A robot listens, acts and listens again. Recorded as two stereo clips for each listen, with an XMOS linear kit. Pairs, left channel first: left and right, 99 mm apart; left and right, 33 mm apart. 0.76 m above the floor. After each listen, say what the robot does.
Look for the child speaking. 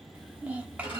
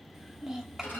Turn 30° right.
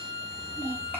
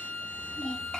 Turn 20° left.
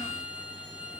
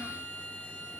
Keep listening.
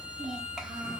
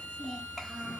Found it: a child speaking, straight ahead.